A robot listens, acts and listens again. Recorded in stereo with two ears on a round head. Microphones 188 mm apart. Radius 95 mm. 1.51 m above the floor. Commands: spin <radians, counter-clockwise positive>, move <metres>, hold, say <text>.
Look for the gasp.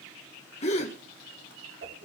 spin 0.52
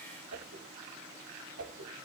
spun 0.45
hold
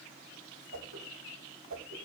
say I heard a gasp, but can't make it out now. It was about straight ahead or 125° left.